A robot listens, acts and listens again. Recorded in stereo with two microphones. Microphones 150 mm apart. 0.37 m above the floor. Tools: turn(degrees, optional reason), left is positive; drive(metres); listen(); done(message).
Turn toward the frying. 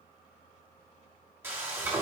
turn(degrees=-15, reason="The frying: about 15° right or 165° right.")
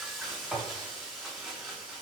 done("Facing the frying, 1 to 2 m away.")